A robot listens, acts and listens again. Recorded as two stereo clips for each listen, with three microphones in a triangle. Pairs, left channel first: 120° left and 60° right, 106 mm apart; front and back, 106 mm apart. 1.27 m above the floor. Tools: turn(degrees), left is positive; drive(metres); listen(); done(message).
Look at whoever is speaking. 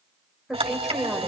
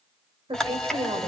turn(degrees=-150)
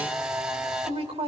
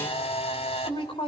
turn(degrees=-35)
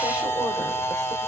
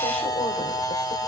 listen()
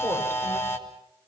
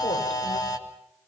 listen()
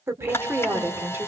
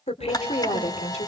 turn(degrees=10)
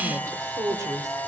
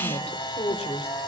done("Facing the woman speaking, 2 to 4 m away.")